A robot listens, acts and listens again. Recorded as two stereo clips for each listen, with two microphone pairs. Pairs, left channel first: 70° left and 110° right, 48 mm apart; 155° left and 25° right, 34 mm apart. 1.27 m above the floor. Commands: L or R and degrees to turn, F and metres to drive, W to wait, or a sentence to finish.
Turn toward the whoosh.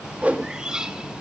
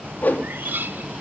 R170
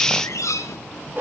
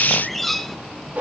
R65
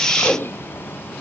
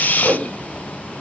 R20
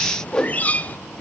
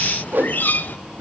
Found it: a whoosh, straight ahead, 2 to 4 m away.